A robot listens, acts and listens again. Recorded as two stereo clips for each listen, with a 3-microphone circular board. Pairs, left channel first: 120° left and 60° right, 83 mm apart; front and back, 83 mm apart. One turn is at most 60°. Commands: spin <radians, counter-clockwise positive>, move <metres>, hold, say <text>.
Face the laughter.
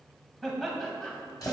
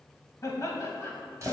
spin 0.70
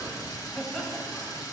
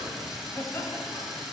spin 0.70
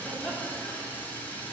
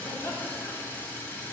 hold
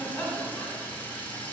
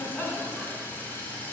spin 0.96
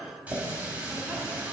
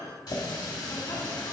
hold
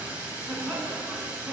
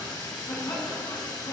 spin 0.26
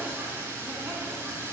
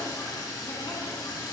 hold
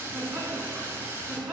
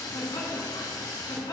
say Found it: laughter, straight ahead, 2 to 4 m away.